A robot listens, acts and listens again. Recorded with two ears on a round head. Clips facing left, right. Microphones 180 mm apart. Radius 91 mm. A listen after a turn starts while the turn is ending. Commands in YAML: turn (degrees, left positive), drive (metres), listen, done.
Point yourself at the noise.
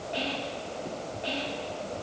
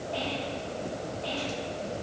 turn: 25
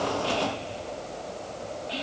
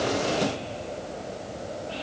turn: 135
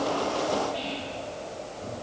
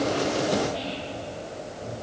done: "Facing the whispering, 2 to 4 m away."